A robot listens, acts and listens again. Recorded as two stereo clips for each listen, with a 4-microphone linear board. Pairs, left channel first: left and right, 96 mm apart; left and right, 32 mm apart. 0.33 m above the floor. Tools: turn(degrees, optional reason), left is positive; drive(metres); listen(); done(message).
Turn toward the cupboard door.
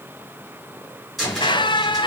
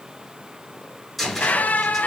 turn(degrees=30)
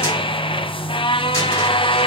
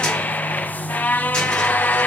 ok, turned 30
listen()
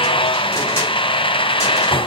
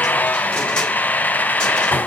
listen()
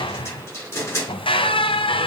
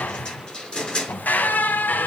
turn(degrees=155, reason="So it is at 155° left.")
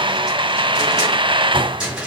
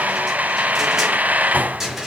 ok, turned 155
done("Facing the cupboard door.")